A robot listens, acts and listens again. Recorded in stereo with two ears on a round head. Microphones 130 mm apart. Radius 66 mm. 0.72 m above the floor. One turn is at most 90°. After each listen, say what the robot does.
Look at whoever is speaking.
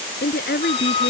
Turn 75° left.
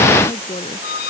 Turn 35° left.
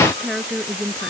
Found it: a woman speaking, straight ahead.